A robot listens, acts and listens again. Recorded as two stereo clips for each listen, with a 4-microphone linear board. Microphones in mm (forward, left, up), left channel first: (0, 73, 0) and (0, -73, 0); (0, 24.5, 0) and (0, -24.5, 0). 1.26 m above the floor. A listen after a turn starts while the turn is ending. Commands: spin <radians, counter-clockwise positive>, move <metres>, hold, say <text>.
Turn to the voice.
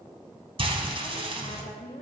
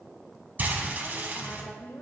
spin 1.13
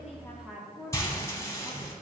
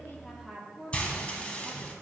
say Found it: a woman speaking, straight ahead, 1 to 2 m away.